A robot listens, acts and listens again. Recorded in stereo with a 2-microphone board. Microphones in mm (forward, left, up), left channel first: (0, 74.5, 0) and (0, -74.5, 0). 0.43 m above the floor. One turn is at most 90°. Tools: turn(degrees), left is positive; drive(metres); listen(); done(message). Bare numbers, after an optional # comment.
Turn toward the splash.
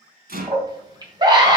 listen()
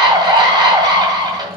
listen()
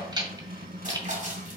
# The splash: about 55° right or 125° right.
turn(-55)
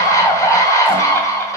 listen()
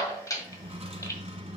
done("I heard a splash, but can't make it out now. It was about straight ahead or 70° right.")